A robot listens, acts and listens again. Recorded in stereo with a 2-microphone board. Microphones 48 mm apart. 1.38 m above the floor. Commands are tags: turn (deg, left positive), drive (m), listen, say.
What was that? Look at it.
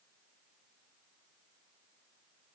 <listen/>
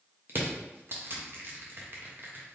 <turn deg="-50"/>
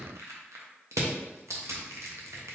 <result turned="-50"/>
<turn deg="-75"/>
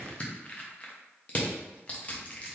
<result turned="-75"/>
<turn deg="35"/>
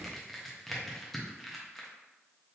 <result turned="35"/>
<say>Found it: crushing, straight ahead, under 1 m away.</say>